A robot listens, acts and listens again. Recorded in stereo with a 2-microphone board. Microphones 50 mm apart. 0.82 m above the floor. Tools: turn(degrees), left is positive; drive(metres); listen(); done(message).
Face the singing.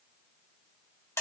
listen()
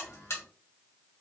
listen()
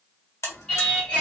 turn(degrees=25)
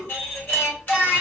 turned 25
turn(degrees=125)
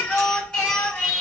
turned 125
turn(degrees=15)
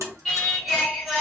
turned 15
done("Found it: singing, straight ahead.")